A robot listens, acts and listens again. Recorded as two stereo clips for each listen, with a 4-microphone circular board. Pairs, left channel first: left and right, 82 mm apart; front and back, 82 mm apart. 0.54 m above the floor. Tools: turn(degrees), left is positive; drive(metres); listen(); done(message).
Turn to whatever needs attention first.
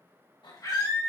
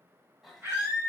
turn(degrees=120)
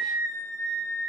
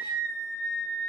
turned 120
turn(degrees=30)
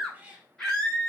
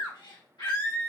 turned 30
turn(degrees=10)
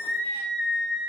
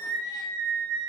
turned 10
done("Found it: a scream, straight ahead.")